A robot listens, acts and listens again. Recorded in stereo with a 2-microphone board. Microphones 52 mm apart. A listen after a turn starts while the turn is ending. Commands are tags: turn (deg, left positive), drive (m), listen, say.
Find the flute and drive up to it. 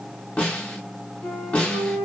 <turn deg="70"/>
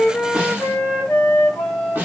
<turn deg="35"/>
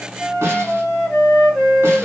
<drive m="1.0"/>
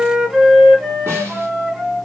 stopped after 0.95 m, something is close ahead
<say>Arrived at the flute, straight ahead.</say>